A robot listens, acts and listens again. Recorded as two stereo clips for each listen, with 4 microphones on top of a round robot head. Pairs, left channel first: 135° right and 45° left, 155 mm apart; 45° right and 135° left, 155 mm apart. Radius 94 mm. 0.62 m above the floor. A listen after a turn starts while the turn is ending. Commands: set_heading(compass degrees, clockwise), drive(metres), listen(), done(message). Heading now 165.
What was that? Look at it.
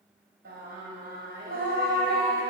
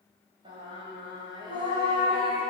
set_heading(90)
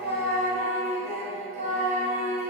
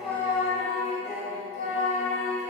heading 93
done("Found it: singing, straight ahead.")